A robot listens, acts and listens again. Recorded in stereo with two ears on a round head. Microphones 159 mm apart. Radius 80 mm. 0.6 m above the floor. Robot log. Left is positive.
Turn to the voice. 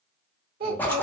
note: The child speaking: about 55° right or 125° right.
cmd yaw -55
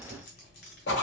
cmd idle
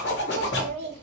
note: So it is at 70° right.
cmd yaw -70
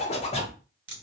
cmd idle
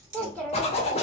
end: Facing the child speaking.